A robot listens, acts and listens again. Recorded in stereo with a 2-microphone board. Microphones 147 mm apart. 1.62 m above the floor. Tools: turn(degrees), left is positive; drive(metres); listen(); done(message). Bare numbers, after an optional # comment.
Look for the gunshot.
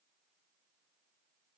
listen()
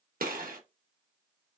turn(-90)
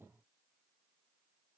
done("I heard a gunshot from this way, but can't make it out now.")